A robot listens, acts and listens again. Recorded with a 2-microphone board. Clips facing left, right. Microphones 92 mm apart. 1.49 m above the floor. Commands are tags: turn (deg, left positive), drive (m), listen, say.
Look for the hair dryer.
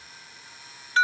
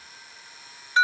<listen/>
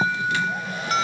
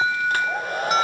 <turn deg="-45"/>
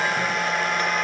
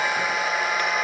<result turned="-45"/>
<say>Facing the hair dryer, under 1 m away.</say>